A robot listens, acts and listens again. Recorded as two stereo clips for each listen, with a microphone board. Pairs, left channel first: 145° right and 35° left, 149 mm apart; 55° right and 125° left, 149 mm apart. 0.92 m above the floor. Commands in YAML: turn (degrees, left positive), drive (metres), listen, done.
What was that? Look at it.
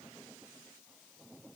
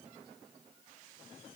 listen: true
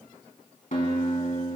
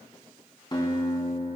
turn: -115
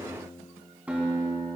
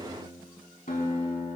turn: -45
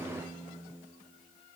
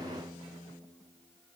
done: "Facing the guitar."